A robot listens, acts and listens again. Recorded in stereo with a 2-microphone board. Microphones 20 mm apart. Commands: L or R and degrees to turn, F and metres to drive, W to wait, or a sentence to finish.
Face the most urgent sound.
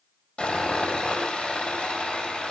W
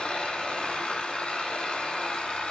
W
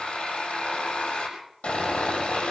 I can't make out anything urgent to turn to.